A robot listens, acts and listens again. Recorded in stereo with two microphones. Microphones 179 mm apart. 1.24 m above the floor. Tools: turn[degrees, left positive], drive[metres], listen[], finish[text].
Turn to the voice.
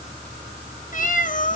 Action: listen[]
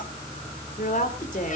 Thought: The woman speaking: about 50° left or 130° left.
Action: turn[50]
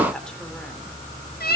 Action: finish[Facing the woman speaking, 2 to 4 m away.]